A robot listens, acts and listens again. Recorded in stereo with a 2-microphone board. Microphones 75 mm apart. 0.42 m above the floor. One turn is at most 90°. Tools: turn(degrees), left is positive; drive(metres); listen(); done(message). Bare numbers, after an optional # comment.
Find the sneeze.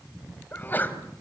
# The sneeze: about 25° left or 155° left.
turn(25)
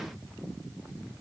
listen()
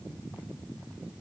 done("I heard a sneeze, but can't make it out now. It was about straight ahead or 130° left.")